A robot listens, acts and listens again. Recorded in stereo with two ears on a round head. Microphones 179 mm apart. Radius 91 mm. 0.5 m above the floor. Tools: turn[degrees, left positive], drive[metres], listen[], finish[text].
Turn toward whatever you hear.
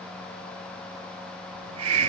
Action: turn[-90]
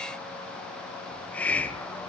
Thought: So it is at 10° left.
Action: turn[10]
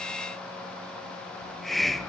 Action: finish[Found it: a hiss, straight ahead, under 1 m away.]